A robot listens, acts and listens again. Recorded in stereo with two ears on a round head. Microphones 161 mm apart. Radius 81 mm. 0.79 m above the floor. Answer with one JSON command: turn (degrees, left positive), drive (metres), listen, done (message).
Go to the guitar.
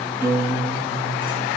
{"turn": -30}
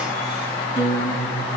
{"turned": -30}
{"turn": 20}
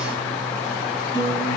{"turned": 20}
{"drive": 1.0}
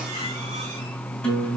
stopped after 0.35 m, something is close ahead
{"done": "Something is in my way. I am facing the guitar but have not reached it."}